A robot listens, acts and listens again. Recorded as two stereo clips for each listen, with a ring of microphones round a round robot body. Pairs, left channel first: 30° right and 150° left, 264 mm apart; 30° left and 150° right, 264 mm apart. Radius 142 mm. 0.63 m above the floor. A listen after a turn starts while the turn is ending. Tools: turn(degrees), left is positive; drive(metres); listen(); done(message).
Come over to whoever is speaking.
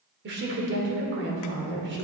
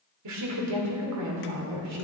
turn(degrees=-165)
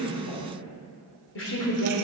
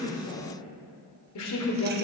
turn(degrees=10)
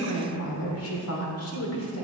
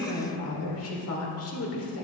drive(metres=1.0)
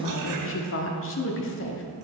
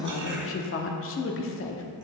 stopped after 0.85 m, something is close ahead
done("I am next to the woman speaking.")